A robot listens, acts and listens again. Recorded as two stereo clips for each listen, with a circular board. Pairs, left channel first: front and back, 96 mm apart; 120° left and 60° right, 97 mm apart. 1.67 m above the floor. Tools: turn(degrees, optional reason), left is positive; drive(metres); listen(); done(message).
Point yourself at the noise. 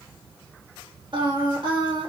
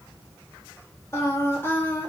turn(degrees=-175, reason="The singing: 175° right.")
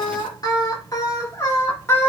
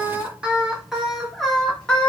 turn(degrees=50, reason="The singing is now 50° left.")
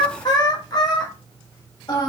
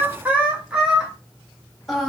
turn(degrees=30, reason="The singing is now 30° left.")
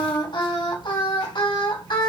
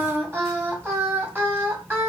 done("Facing the singing, 1 to 2 m away.")